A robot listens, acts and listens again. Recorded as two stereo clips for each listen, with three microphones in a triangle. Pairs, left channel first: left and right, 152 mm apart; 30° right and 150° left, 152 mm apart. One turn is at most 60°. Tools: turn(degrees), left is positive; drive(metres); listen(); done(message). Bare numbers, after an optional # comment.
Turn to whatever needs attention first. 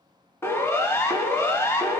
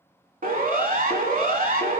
# The siren: 160° left.
turn(60)
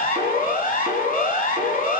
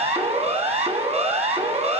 # The siren is now 105° left.
turn(60)
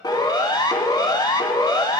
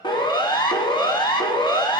# The siren is now 25° left.
turn(25)
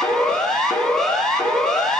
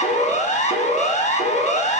done("Facing the siren.")